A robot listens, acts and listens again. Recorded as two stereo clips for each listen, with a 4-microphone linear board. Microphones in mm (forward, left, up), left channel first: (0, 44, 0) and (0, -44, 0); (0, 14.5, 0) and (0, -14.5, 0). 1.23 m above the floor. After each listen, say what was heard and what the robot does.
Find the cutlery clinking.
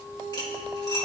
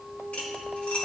The cutlery clinking: about 50° left or 130° left. Turn 50° left.
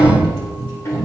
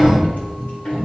Keep listening.
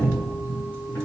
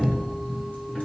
Keep listening.
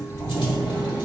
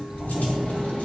I heard cutlery clinking, but can't make it out now. It was about straight ahead or 80° left.